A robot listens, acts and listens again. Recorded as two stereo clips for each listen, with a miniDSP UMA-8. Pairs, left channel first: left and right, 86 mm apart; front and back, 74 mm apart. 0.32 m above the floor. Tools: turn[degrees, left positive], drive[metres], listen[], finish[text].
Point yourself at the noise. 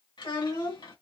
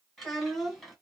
Thought: The child speaking: 85° left.
Action: turn[85]
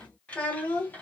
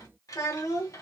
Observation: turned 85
Thought: The child speaking is now 25° left.
Action: turn[25]
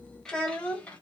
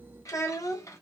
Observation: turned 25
Thought: The child speaking is now 20° left.
Action: turn[20]
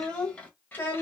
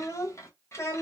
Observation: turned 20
Thought: The child speaking is now 35° left.
Action: turn[35]
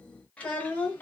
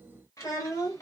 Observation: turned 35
Thought: The child speaking is now 25° left.
Action: turn[25]
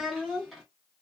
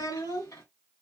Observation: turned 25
Action: finish[Found it: a child speaking, straight ahead.]